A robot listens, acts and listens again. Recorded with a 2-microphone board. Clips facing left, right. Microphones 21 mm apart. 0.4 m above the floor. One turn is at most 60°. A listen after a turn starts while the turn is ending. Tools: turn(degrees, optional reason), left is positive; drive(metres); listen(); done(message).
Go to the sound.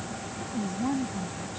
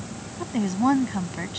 turn(degrees=-55, reason="The woman speaking: about 55° right or 125° right.")
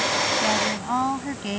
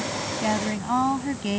drive(metres=1.0)
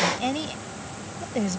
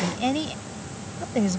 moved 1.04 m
drive(metres=1.0)
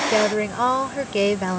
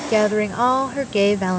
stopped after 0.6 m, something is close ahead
turn(degrees=-10, reason="The woman speaking is now 10° right.")
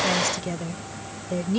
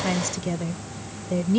done("Arrived at the woman speaking, straight ahead.")